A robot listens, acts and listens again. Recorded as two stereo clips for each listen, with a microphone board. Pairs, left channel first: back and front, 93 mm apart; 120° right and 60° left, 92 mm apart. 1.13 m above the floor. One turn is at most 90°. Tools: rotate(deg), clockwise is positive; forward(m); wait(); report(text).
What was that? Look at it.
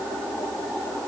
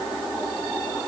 wait()
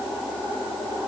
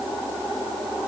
wait()
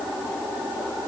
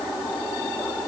report("I can't make out anything to turn to.")